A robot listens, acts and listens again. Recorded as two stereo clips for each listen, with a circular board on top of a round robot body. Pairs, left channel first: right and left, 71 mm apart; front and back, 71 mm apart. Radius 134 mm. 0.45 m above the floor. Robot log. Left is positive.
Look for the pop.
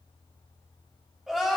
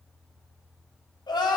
cmd idle
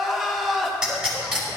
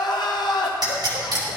note: The pop: 170° left.
cmd yaw +170
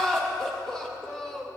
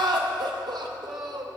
end: Facing where the pop came from. I can't hear it now.